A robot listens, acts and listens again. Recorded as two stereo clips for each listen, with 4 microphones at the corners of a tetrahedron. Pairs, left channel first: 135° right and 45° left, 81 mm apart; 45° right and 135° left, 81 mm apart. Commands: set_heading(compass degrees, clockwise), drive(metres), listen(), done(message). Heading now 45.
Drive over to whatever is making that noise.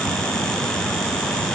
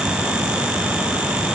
listen()
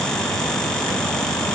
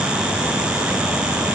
listen()
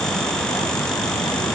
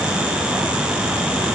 done("I can't make out anything.")